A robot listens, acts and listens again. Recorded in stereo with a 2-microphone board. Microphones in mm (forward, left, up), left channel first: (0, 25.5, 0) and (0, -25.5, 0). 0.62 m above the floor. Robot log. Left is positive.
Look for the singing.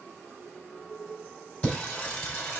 note: The singing: about 35° left or 145° left.
cmd yaw +35
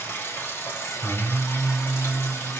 note: So it is at 105° left.
cmd yaw +105
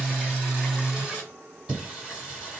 note: The singing is now 10° right.
cmd yaw -10
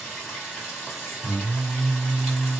end: Facing the singing.